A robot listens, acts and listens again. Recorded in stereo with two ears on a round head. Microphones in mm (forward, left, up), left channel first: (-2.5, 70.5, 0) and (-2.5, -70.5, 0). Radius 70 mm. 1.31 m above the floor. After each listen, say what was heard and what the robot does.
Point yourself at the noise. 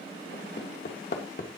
The hammering: about 60° left or 120° left. Turn 60° left.
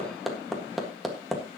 Found it: hammering, straight ahead.